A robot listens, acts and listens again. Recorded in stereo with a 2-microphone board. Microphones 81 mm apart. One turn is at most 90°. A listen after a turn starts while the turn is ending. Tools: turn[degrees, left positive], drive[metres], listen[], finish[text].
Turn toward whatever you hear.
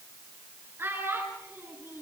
Thought: The child speaking: about 30° right or 150° right.
Action: turn[-30]
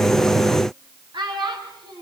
Thought: So it is at 110° right.
Action: turn[-90]
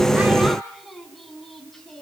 Action: finish[Facing the child speaking.]